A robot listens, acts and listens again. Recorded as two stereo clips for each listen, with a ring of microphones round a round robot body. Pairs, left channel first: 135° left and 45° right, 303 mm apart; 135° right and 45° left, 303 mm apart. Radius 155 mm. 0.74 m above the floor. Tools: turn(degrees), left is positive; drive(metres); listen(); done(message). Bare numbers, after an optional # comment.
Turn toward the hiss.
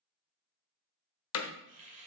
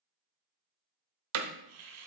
# The hiss: 25° left.
turn(25)
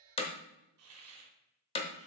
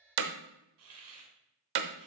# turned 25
done("Found it: a hiss, straight ahead, 2 to 4 m away.")